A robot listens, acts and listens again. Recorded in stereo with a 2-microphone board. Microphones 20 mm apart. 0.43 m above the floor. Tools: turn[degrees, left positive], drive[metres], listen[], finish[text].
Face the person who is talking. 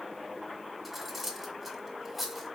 Action: listen[]
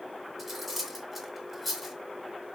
Action: listen[]
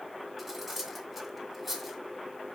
Action: finish[I can't make out anyone speaking, only cutlery clinking.]